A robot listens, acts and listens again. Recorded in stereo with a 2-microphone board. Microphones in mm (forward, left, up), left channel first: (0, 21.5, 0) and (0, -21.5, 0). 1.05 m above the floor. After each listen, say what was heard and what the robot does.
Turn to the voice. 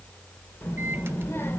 The child speaking: about 70° left or 110° left. Turn 70° left.
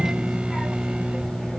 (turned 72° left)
Keep listening.
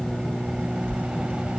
So it is at 30° left. Turn 30° left.
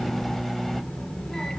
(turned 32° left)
The child speaking is now 15° left. Turn 15° left.
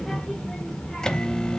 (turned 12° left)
The child speaking is now 10° left. Turn 10° left.
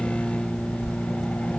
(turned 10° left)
Facing the child speaking.